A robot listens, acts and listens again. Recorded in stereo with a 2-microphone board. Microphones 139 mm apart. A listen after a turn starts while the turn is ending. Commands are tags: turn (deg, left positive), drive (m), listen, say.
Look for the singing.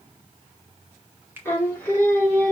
<turn deg="30"/>
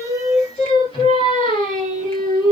<turn deg="145"/>
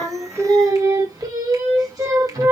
<turn deg="-25"/>
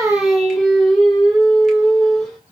<say>Found it: singing, straight ahead.</say>